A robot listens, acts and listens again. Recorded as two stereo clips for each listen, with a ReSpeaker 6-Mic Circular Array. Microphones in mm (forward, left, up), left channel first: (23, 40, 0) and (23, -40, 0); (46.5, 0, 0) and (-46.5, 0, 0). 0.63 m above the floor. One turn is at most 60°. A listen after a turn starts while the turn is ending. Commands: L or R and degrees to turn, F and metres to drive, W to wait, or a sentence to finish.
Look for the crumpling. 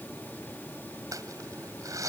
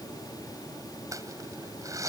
R60
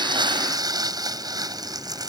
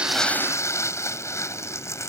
R60
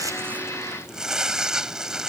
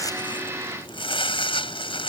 R10
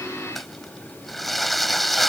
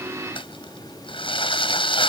Facing the crumpling.